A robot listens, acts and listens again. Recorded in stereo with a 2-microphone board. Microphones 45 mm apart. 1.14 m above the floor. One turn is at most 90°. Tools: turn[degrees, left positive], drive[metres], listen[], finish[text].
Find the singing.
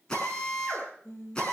Thought: The singing: about 70° left or 110° left.
Action: turn[70]
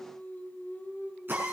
Thought: So it is at 50° left.
Action: turn[50]
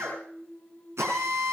Thought: The singing is now 25° left.
Action: turn[25]
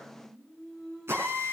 Action: finish[Facing the singing.]